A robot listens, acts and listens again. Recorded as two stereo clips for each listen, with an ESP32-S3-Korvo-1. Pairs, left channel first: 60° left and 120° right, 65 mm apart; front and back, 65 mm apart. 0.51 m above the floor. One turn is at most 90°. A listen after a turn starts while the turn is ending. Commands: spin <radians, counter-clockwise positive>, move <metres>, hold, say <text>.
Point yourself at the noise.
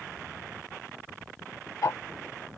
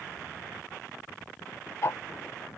spin 0.61
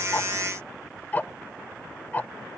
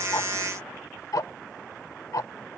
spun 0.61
say Found it: ticking, straight ahead.